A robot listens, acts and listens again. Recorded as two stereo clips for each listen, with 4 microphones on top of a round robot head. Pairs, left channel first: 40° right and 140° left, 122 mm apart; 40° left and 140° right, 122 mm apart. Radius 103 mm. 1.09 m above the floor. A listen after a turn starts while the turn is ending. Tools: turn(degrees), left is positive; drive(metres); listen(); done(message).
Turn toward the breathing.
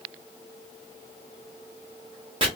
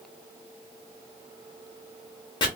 listen()
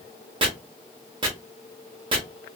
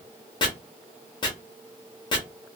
listen()
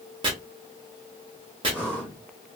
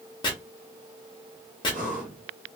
turn(degrees=-140)
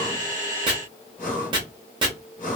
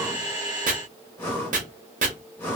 turn(degrees=-35)
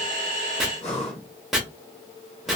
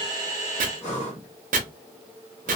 done("Facing the breathing.")